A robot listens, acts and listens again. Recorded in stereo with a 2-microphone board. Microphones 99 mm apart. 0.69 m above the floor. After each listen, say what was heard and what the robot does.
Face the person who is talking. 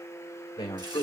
The man speaking: about 65° left or 115° left. Turn 65° left.
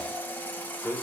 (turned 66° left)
So it is at 30° left. Turn 30° left.
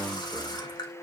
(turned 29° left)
Found it: a man speaking, straight ahead.